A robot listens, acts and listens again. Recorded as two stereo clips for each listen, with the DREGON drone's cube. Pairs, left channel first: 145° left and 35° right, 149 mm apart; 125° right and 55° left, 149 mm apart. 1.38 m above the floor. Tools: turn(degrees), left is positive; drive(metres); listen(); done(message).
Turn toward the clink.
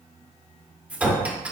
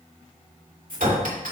turn(degrees=45)
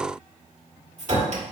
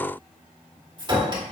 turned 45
done("Facing the clink.")